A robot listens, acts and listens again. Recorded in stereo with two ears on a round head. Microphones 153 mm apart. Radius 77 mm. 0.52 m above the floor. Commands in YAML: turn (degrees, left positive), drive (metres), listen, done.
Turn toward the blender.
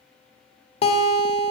listen: true
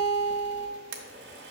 turn: -70
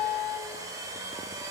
turn: -20
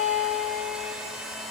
done: "Facing the blender, 1 to 2 m away."